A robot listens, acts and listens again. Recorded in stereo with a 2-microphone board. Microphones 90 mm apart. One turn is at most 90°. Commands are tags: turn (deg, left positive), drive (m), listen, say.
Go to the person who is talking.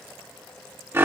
<listen/>
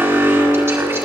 <listen/>
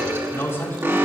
<turn deg="30"/>
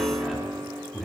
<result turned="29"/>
<drive m="1.0"/>
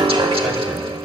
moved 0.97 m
<listen/>
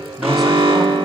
<listen/>
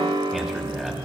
<drive m="1.0"/>
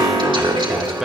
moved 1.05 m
<drive m="1.0"/>
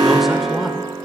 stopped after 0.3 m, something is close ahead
<listen/>
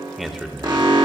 <say>I am next to the man speaking.</say>